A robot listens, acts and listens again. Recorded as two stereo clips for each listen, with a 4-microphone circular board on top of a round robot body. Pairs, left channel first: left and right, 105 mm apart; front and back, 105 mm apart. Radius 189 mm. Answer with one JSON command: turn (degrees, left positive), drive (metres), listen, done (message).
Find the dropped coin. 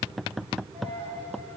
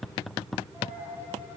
{"turn": -110}
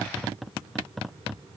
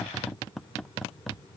{"done": "I heard a dropped coin from this way, but can't make it out now."}